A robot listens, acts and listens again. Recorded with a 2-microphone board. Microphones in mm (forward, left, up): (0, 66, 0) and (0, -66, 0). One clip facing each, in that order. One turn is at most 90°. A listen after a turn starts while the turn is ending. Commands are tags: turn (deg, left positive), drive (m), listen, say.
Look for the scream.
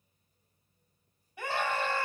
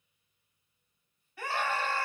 <turn deg="20"/>
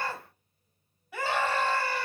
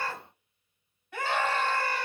<say>Facing the scream, 2 to 4 m away.</say>